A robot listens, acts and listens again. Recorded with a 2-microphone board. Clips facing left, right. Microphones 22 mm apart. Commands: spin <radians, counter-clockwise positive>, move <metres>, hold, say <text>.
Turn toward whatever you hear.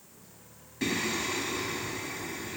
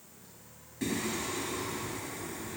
spin 0.52
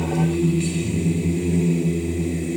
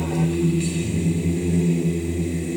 say Facing the singing.